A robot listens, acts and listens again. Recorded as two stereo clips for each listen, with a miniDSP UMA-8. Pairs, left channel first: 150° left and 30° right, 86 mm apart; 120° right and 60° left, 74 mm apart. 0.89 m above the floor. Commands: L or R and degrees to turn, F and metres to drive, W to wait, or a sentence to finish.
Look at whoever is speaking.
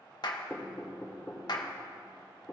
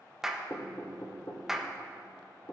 W
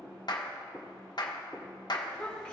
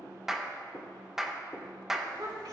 L70
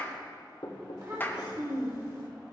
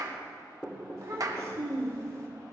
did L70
L15
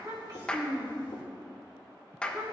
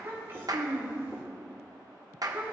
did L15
Facing the child speaking, 2 to 4 m away.